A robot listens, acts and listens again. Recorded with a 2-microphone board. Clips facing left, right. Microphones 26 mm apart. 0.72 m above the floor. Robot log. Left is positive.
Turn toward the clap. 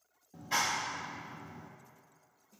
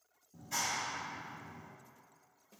note: The clap: about 45° left or 135° left.
cmd yaw +45
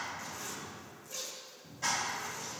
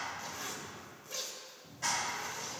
end: Facing the clap.